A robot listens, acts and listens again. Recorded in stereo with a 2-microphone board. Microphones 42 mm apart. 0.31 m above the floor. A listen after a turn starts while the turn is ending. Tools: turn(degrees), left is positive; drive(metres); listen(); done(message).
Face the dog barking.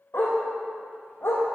turn(degrees=65)
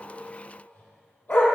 turn(degrees=50)
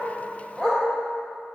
turn(degrees=10)
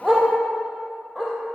done("Found it: a dog barking, straight ahead.")